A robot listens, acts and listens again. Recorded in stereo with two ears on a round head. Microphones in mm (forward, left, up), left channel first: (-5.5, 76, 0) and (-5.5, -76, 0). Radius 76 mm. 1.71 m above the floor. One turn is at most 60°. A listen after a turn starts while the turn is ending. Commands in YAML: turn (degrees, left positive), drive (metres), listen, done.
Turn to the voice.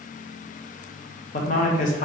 turn: 50
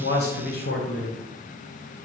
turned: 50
turn: 60
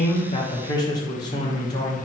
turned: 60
turn: 25
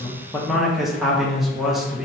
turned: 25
done: "Facing the man speaking, under 1 m away."